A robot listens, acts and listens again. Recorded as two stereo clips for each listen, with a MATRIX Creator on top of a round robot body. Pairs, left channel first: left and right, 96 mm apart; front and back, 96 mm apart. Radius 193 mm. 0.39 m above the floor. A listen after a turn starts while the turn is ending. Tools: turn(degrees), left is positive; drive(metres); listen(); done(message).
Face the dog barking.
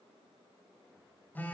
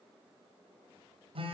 listen()
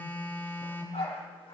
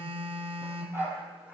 turn(degrees=110)
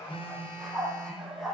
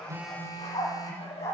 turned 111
done("Found it: a dog barking, straight ahead, over 4 m away.")